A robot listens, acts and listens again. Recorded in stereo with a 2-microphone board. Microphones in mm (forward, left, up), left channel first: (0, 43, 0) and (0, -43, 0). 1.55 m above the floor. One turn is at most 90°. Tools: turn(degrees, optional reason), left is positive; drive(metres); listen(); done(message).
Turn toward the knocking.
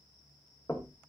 turn(degrees=35, reason="The knocking: about 35° left or 145° left.")
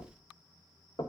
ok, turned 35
turn(degrees=90, reason="So it is at 105° left.")
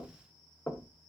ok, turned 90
turn(degrees=25, reason="The knocking is now 25° left.")
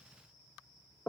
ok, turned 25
turn(degrees=20, reason="The knocking is now 20° left.")
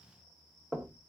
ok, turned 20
done("Facing the knocking.")